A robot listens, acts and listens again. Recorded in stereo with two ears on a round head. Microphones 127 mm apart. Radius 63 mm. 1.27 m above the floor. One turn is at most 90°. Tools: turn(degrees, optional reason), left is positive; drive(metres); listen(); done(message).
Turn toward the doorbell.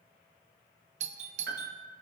turn(degrees=-55, reason="The doorbell: about 55° right or 125° right.")
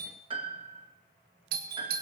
turn(degrees=-70, reason="So it is at 70° right.")
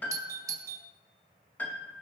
turn(degrees=-25, reason="The doorbell is now 25° right.")
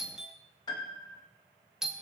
done("Found it: a doorbell, straight ahead.")